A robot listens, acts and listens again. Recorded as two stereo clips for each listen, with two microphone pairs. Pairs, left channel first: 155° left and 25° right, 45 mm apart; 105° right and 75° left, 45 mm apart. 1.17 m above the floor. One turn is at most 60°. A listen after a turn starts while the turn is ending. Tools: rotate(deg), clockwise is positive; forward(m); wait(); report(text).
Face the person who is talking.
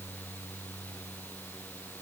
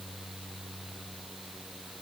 wait()
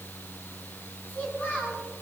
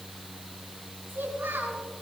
rotate(-60)
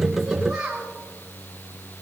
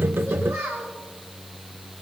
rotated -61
rotate(-50)
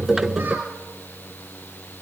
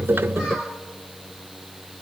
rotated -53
report("Facing the child speaking, over 4 m away.")